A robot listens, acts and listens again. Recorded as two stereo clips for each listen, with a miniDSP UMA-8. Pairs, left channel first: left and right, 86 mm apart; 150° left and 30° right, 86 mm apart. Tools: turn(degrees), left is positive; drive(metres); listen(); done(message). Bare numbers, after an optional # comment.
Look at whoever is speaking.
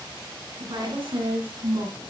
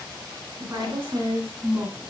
# The woman speaking: 95° right.
turn(-95)
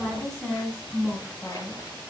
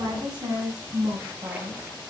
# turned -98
done("Facing the woman speaking, 2 to 4 m away.")